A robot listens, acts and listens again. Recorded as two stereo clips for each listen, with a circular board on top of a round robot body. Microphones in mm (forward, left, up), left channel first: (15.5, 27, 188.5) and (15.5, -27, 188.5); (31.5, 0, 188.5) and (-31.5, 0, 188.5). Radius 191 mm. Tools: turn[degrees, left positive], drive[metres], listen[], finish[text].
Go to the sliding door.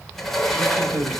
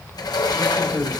Action: drive[1.0]
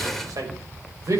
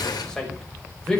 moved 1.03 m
Action: drive[1.0]
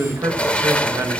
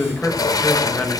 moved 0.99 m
Thought: The sliding door is now 20° left.
Action: turn[20]
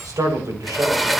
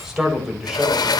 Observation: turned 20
Action: drive[1.0]
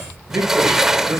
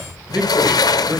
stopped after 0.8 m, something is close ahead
Thought: The sliding door is now 10° right.
Action: turn[-10]
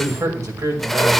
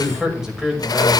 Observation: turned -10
Action: finish[Arrived at the sliding door, straight ahead.]